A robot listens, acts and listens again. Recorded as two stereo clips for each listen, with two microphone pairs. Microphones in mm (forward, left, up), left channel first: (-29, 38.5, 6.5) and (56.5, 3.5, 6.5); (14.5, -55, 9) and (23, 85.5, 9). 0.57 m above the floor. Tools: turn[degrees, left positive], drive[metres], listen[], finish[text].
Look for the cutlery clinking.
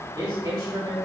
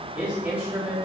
Action: listen[]
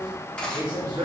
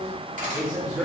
Thought: The cutlery clinking: 80° left.
Action: turn[80]
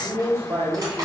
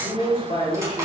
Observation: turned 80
Thought: The cutlery clinking is now 20° left.
Action: turn[20]
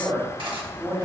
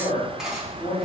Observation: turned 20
Action: finish[Facing the cutlery clinking.]